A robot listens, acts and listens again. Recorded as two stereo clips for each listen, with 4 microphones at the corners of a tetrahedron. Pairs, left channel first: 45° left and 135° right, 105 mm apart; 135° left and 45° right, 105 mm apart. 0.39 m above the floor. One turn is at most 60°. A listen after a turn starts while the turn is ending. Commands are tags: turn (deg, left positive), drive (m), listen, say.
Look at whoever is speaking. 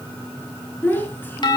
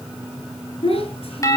<turn deg="60"/>
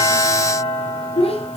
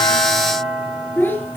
<turn deg="60"/>
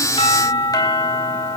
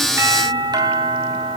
<listen/>
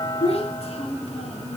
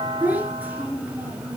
<turn deg="30"/>
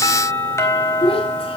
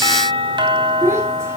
<turn deg="20"/>
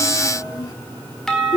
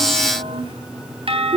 <say>Facing the child speaking, over 4 m away.</say>